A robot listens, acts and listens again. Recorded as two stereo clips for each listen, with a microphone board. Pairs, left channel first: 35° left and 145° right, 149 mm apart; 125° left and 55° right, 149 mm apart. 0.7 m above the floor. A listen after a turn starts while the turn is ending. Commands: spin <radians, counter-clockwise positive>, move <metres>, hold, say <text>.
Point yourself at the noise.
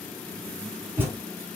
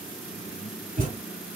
spin -1.22
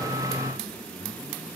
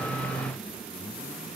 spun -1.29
say I heard a thud from this way, but can't make it out now.